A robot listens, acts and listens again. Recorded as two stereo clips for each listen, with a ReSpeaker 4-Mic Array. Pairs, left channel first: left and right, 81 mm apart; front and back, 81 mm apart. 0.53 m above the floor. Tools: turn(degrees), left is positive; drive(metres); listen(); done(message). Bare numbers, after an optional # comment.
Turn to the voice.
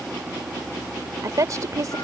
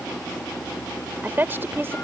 # The woman speaking: 125° right.
turn(-125)
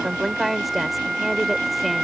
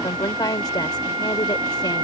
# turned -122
done("Found it: a woman speaking, straight ahead.")